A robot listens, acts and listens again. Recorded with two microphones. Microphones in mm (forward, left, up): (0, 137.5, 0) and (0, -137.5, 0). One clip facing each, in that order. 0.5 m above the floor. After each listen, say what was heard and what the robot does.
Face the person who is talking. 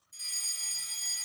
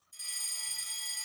Keep listening.
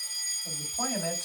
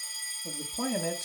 The man speaking: about 45° right or 135° right. Turn 45° right.
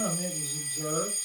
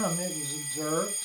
So it is at 85° right. Turn 85° right.
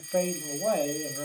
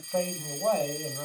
The man speaking is now 15° left. Turn 15° left.
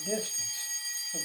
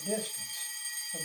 Facing the man speaking, 2 to 4 m away.